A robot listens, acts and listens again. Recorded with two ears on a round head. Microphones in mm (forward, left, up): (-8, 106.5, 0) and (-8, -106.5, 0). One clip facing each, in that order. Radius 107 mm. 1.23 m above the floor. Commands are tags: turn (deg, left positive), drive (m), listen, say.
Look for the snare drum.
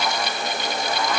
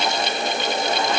<listen/>
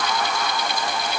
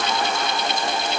<listen/>
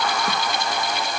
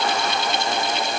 <say>I can't make out a snare drum to turn to.</say>